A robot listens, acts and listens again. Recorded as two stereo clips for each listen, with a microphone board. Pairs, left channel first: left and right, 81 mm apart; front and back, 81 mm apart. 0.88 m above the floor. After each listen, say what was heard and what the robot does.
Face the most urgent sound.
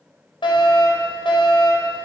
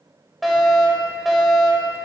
The fire alarm: 90° left. Turn 90° left.
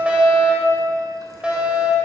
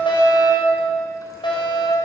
The fire alarm is now 15° right. Turn 15° right.
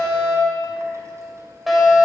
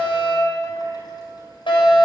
Found it: a fire alarm, straight ahead.